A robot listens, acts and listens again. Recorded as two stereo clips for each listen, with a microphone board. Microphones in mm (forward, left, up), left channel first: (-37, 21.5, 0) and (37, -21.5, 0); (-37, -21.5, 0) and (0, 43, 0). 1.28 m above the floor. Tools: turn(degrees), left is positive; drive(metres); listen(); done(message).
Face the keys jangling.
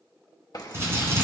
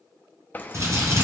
turn(degrees=180)
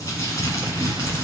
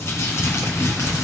listen()
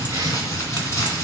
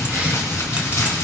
listen()
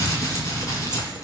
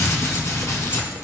done("I heard keys jangling from this way, but can't make it out now.")